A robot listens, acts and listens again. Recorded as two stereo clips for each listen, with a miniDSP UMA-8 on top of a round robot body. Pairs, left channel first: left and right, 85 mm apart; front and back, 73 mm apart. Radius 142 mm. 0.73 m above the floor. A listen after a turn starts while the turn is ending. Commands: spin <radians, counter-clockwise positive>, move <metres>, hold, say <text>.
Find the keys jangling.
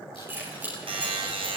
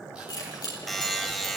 spin -0.44
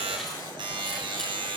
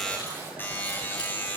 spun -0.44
hold
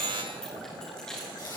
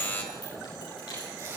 say Found it: keys jangling, straight ahead.